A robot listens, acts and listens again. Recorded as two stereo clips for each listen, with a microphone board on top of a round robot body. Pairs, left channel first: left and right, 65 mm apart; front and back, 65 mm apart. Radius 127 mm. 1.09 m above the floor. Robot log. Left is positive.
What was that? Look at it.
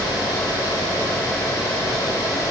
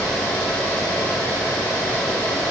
cmd idle
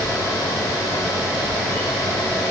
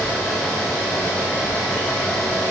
cmd idle
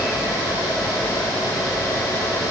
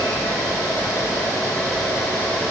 end: I can't make out anything.